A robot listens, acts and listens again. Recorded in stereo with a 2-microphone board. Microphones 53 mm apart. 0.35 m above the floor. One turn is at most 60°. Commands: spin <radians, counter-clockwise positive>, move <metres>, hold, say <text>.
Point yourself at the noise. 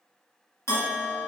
spin 0.96
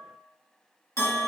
spin 1.05
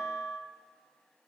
spin 0.44
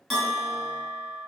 say Found it: a bell, straight ahead.